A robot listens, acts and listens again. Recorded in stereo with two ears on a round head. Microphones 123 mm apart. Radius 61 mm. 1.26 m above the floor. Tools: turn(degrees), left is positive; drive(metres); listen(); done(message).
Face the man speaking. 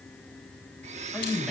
turn(degrees=30)
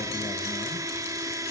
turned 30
listen()
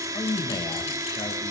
turn(degrees=155)
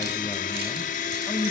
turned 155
turn(degrees=15)
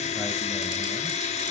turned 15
listen()
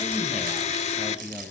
done("Found it: a man speaking, straight ahead, over 4 m away.")